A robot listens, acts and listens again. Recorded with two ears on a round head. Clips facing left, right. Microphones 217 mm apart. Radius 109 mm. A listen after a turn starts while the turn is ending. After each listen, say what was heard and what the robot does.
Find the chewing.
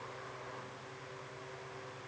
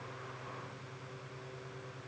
Keep listening.
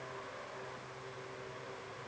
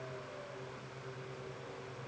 Keep listening.
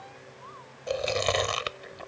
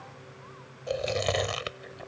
Turn 30° left.
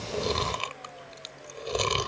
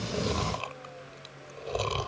So it is at 145° left. Turn 145° left.
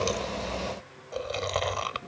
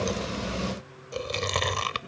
The chewing is now 40° right. Turn 40° right.
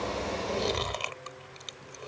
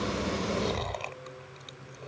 The chewing is now 20° left. Turn 20° left.
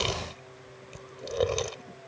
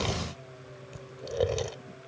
Found it: chewing, straight ahead.